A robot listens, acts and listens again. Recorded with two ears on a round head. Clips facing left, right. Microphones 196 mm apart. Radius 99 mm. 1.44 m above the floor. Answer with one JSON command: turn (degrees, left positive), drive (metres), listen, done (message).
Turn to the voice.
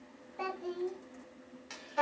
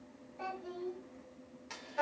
{"turn": 65}
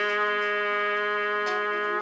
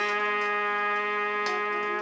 {"listen": true}
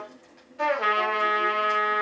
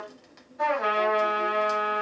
{"listen": true}
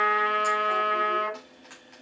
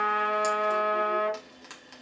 {"done": "I heard a child speaking, but can't make it out now. It was about straight ahead or 50° left."}